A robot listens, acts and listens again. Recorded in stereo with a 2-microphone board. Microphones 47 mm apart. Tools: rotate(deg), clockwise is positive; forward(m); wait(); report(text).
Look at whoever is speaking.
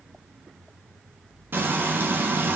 wait()
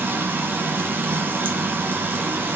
wait()
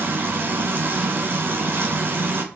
report("I can't make out anyone speaking to turn to.")